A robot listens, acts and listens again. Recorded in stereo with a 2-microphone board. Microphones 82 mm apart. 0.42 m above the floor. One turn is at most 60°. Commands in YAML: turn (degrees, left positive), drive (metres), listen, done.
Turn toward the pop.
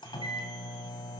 listen: true
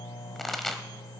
turn: 30
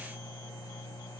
listen: true
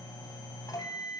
done: "I heard a pop, but can't make it out now. It was about 25° right or 145° left."